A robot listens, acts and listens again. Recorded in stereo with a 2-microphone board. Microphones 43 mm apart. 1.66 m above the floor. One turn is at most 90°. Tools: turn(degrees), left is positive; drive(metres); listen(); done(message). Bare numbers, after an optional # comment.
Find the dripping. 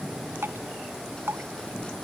# The dripping: about 60° right or 120° right.
turn(-60)
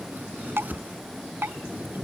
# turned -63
# So it is at 60° right.
turn(-60)
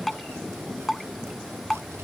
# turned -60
done("Facing the dripping.")